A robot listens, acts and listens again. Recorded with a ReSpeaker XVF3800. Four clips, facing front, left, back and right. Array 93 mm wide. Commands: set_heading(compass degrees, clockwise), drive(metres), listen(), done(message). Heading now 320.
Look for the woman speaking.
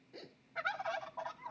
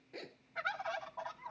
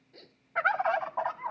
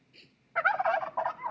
listen()
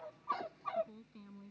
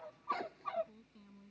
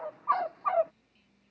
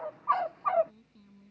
set_heading(310)
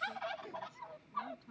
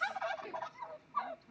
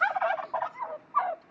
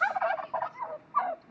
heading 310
done("Facing the woman speaking.")